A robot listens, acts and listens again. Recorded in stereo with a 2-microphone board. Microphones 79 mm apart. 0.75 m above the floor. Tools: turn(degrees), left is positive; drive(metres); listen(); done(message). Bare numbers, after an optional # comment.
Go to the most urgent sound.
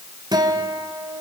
listen()
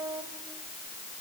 listen()
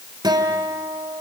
done("I can't make out anything urgent to turn to.")